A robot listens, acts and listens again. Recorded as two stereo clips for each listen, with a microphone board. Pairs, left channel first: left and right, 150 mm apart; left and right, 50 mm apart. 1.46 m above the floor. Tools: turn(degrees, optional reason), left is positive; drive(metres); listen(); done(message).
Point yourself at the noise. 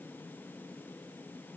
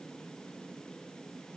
listen()
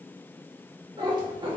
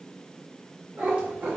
turn(degrees=-35, reason="The cat meowing: about 35° right or 145° right.")
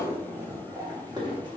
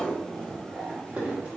turn(degrees=-30, reason="The cat meowing: about 30° right or 150° right.")
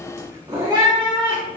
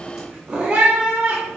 turn(degrees=-30, reason="The cat meowing: about 30° right or 150° right.")
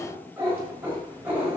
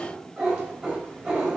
turn(degrees=-15, reason="So it is at 15° right.")
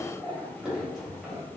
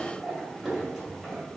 done("Found it: a cat meowing, straight ahead.")